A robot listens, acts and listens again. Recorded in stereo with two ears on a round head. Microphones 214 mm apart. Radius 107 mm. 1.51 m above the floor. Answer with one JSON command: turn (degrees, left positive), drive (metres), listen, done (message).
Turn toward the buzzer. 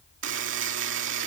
{"turn": -50}
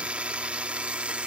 {"done": "Facing the buzzer."}